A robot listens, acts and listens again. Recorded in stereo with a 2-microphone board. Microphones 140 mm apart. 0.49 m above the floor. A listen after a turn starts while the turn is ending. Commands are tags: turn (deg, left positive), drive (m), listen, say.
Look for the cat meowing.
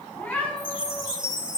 <turn deg="30"/>
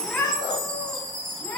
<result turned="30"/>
<turn deg="15"/>
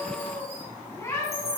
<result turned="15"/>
<turn deg="20"/>
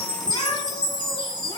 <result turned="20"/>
<listen/>
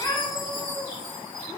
<turn deg="25"/>
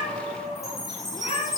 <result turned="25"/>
<turn deg="130"/>
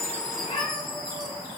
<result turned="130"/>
<turn deg="45"/>
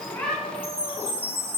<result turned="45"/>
<listen/>
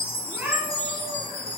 <turn deg="-15"/>
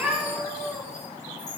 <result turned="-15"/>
<say>Facing the cat meowing.</say>